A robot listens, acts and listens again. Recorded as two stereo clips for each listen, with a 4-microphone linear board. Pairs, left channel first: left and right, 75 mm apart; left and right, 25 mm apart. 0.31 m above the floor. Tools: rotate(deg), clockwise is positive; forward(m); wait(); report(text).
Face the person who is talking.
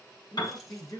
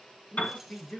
rotate(-55)
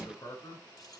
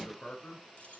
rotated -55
rotate(-65)
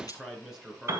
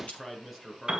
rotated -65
report("Facing the man speaking, 2 to 4 m away.")